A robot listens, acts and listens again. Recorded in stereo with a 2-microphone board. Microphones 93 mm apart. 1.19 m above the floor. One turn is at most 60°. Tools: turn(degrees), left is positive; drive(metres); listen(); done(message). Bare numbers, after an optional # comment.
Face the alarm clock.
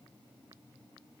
listen()
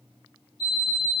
# The alarm clock: about 55° left or 125° left.
turn(55)
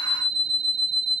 # So it is at 10° left.
turn(10)
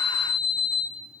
done("Facing the alarm clock.")